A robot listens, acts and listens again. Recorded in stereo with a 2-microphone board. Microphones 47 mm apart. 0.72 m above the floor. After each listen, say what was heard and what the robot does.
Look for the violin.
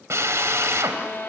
The violin: about 45° left or 135° left. Turn 45° left.
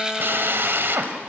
Keep listening.
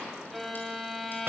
Facing the violin.